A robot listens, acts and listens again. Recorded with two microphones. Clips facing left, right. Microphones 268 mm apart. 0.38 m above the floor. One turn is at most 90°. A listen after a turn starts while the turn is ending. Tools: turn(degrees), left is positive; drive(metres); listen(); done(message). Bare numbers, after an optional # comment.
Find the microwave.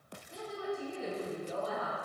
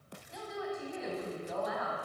listen()
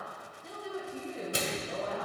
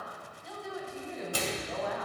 # The microwave: about 20° left or 160° left.
turn(20)
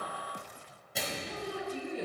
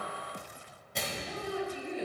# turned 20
done("Facing the microwave.")